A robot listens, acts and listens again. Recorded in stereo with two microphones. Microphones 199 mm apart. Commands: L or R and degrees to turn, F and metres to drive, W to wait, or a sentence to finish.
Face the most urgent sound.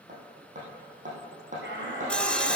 R65
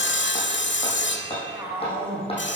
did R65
R10
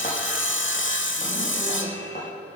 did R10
W
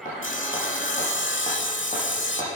W
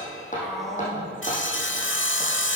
Found it: a shout, straight ahead, 2 to 4 m away.